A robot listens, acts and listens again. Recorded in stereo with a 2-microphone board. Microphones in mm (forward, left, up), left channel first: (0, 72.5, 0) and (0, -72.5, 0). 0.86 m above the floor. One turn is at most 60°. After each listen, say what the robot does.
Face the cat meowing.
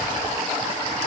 Keep listening.
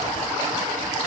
Keep listening.
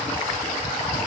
I can't make out a cat meowing.